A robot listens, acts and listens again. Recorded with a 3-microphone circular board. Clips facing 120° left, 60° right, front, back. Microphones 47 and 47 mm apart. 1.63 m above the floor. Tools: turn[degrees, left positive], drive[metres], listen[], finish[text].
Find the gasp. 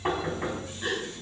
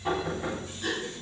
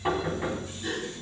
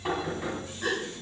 Thought: The gasp: 165° right.
Action: turn[-165]
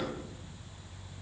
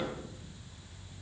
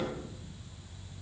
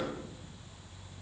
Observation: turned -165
Action: finish[I heard a gasp from this way, but can't make it out now.]